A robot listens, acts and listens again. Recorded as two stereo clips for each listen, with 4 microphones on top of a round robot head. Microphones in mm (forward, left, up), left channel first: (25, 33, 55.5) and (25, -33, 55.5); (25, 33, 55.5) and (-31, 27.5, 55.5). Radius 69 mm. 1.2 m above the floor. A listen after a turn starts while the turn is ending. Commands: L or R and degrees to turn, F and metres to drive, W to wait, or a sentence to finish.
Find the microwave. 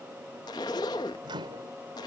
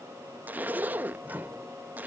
R110
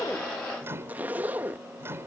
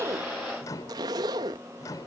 R35
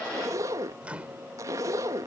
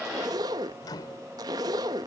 R20
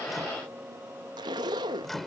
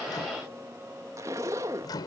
Facing the microwave.